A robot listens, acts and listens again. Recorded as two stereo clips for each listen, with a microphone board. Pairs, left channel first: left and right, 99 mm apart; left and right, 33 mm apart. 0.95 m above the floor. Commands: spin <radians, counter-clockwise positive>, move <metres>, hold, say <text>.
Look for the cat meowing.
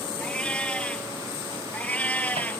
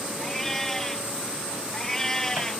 spin 0.52
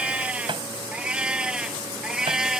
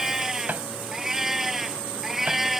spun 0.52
say Found it: a cat meowing, straight ahead.